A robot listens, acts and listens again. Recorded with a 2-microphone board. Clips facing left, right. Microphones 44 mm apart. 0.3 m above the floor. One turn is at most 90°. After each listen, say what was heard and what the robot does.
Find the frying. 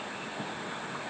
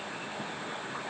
Keep listening.
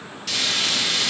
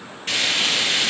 The frying: about 35° right or 145° right. Turn 35° right.
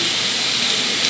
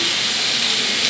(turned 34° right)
Found it: frying, straight ahead.